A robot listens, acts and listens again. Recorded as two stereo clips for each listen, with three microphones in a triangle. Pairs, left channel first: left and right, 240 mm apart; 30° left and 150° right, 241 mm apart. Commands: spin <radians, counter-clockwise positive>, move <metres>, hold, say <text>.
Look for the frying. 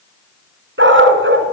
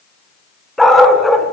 hold
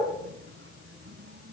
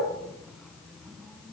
hold
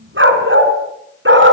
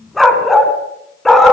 say I can't make out frying to turn to.